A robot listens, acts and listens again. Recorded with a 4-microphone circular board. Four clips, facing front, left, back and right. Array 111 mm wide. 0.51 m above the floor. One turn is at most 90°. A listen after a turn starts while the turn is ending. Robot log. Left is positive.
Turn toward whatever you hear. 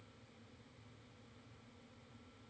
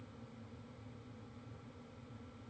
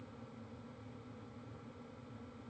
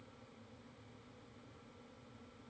cmd idle
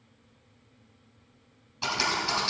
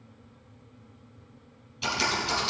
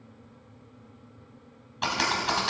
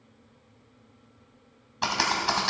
note: The typing on a keyboard: 115° right.
cmd yaw -90
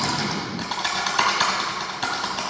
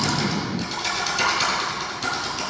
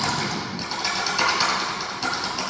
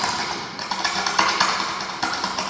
note: The typing on a keyboard is now 65° right.
cmd yaw -65
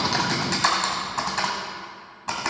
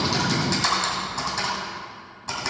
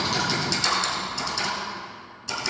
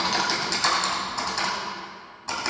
end: Found it: typing on a keyboard, straight ahead, 1 to 2 m away.